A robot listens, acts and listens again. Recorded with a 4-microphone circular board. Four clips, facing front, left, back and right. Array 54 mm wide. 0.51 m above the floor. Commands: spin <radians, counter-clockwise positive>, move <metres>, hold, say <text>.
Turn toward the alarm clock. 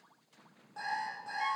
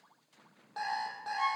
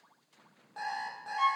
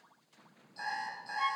spin 1.75
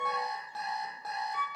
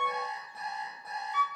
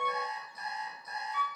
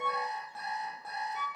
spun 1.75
say Facing the alarm clock, over 4 m away.